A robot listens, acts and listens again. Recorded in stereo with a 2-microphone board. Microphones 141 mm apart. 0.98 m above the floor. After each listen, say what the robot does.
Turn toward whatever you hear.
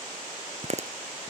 Turn 50° right.
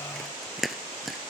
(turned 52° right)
Facing the chewing.